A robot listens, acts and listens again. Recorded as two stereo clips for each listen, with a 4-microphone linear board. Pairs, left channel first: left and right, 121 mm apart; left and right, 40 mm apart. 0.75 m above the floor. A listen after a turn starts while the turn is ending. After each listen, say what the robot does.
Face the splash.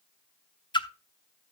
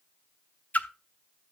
Turn 40° left.
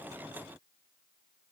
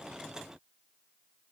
Keep listening.
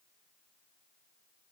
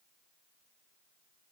I heard a splash, but can't make it out now. It was about straight ahead or 100° left.